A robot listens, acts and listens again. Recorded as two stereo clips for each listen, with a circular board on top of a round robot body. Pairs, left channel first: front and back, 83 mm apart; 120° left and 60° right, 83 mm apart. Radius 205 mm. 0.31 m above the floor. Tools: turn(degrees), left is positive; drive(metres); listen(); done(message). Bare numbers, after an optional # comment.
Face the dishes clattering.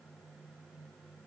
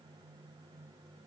listen()
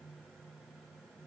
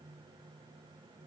listen()
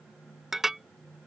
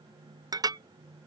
# The dishes clattering: 95° right.
turn(-95)
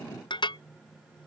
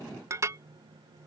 # The dishes clattering is now 10° right.
turn(-10)
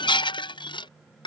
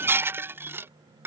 done("Facing the dishes clattering.")